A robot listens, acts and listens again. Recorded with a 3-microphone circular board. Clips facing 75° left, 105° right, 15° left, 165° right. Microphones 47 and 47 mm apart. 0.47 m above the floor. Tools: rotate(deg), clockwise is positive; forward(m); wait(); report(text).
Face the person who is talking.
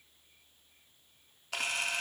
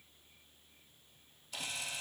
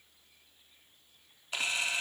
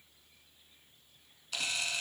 wait()
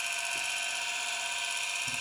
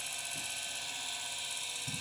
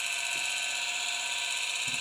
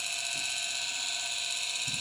wait()
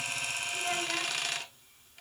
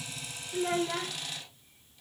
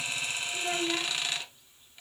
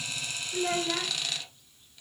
rotate(165)
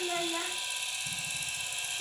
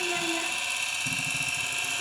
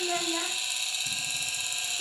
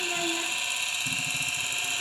report("Found it: a child speaking, straight ahead.")